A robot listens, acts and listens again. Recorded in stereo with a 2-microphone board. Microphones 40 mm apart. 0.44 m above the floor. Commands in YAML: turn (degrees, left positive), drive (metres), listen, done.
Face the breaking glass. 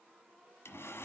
listen: true
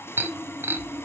turn: -55
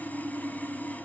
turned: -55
listen: true
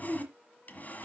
done: "I heard breaking glass, but can't make it out now. It was about straight ahead or 70° right."